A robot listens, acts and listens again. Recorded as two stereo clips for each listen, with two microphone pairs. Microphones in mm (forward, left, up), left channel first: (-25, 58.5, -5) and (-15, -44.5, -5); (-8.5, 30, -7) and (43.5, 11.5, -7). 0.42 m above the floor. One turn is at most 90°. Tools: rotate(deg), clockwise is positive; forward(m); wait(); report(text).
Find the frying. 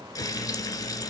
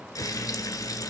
rotate(-90)
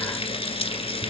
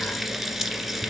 rotate(-65)
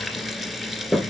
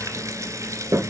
report("Facing the frying, 1 to 2 m away.")